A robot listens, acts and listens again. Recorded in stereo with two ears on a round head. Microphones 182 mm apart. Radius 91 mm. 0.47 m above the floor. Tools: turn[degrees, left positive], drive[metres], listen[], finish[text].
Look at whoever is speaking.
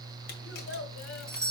Thought: The child speaking: about 70° left or 110° left.
Action: turn[70]
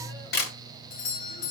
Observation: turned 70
Action: listen[]
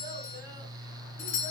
Action: listen[]
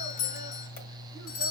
Action: finish[I heard a child speaking, but can't make it out now. It was about straight ahead or 40° left.]